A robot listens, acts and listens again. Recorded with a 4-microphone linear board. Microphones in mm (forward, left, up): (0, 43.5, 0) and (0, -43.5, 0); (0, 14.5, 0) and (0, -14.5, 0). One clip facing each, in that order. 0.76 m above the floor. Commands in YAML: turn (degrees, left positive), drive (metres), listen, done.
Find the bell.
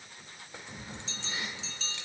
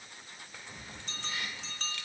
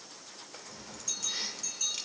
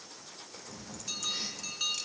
turn: -50
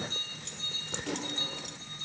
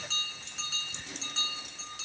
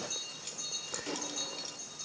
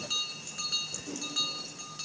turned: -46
turn: -80
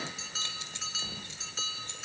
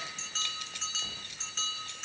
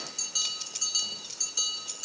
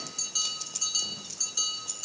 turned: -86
done: "Facing the bell, 2 to 4 m away."